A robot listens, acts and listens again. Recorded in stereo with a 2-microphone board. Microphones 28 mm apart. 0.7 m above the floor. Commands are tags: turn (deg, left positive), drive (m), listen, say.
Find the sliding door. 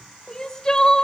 <listen/>
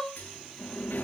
<turn deg="90"/>
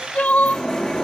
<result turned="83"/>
<turn deg="15"/>
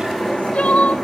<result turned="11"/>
<say>Facing the sliding door, over 4 m away.</say>